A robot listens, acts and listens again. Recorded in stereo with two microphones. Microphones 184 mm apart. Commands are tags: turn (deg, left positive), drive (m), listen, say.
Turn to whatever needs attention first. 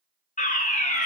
<turn deg="40"/>
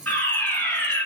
<turn deg="10"/>
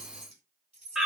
<say>Facing the fire alarm.</say>